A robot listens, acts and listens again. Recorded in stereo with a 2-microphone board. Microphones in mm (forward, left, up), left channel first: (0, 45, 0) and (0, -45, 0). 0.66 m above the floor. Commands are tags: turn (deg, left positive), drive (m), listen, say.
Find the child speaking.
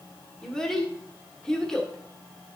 <turn deg="30"/>
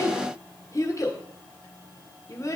<turn deg="145"/>
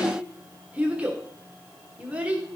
<turn deg="-15"/>
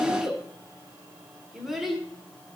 <say>Facing the child speaking, 1 to 2 m away.</say>